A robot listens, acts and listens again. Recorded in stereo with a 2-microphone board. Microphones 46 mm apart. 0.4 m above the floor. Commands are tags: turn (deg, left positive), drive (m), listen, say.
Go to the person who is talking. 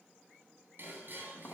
<listen/>
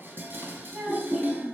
<turn deg="-30"/>
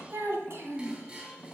<turn deg="-115"/>
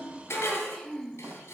<drive m="1.0"/>
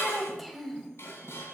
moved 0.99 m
<drive m="1.0"/>
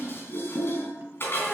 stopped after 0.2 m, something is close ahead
<say>I am next to the child speaking.</say>